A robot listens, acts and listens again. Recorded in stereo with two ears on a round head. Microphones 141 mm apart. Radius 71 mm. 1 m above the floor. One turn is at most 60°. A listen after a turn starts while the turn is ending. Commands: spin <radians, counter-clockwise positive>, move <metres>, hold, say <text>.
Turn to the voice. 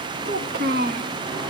spin -1.05
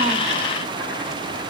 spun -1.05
hold
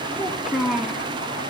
say Found it: a child speaking, straight ahead, 1 to 2 m away.